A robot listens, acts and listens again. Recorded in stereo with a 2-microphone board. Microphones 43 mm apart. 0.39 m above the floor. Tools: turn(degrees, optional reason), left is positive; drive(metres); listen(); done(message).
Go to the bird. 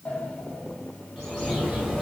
turn(degrees=-30)
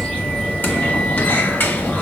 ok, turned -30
turn(degrees=20, reason="So it is at 20° left.")
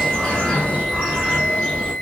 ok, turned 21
drive(metres=1.0)
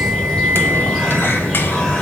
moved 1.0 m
drive(metres=1.0)
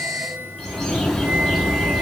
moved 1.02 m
drive(metres=1.0)
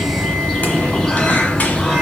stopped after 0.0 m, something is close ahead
turn(degrees=10, reason="The bird is now 10° left.")
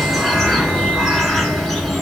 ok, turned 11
done("Arrived at the bird, straight ahead.")